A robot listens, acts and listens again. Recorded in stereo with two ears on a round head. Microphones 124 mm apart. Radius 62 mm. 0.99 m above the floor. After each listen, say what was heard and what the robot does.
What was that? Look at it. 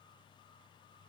Keep listening.
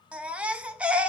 Turn 30° right.
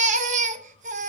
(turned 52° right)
So it is at 120° right. Turn 120° right.
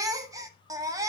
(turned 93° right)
The baby crying is now 25° right. Turn 25° right.
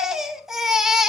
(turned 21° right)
Found it: a baby crying, straight ahead.